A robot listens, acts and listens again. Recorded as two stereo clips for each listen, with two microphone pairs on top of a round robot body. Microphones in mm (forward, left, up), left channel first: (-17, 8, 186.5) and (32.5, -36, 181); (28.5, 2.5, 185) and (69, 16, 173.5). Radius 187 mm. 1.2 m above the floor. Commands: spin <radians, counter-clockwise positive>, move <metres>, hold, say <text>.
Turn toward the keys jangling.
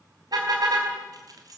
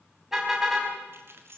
spin -0.17
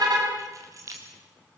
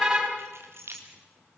say Facing the keys jangling, 2 to 4 m away.